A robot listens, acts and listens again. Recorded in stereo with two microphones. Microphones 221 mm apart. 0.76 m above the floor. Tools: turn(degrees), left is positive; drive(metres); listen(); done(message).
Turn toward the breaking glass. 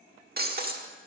turn(degrees=-45)
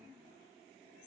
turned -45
listen()
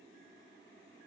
done("I heard breaking glass, but can't make it out now. It was about straight ahead or 90° right.")